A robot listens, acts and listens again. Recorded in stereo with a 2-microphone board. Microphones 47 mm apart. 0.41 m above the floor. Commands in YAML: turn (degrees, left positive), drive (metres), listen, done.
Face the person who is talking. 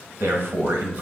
turn: -60
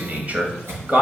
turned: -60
turn: -40
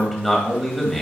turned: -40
done: "Found it: a man speaking, straight ahead, 1 to 2 m away."